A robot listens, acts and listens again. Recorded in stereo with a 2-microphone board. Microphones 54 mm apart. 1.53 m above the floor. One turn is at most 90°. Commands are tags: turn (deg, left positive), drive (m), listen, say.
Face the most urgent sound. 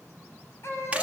<turn deg="55"/>
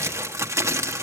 <listen/>
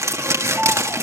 <say>Found it: a baby crying, straight ahead, over 4 m away.</say>